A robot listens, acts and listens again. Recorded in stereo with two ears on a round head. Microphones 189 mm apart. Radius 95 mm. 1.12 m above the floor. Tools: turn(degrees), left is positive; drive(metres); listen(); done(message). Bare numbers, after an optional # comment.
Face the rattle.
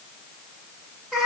listen()
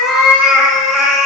listen()
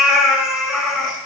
done("I can't make out a rattle, only a cat meowing.")